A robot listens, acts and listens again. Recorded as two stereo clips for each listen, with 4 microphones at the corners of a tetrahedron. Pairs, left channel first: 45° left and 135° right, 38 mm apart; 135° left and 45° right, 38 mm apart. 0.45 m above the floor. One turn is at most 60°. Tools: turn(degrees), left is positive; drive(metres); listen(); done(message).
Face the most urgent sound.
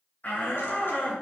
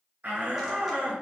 done("Facing the shout.")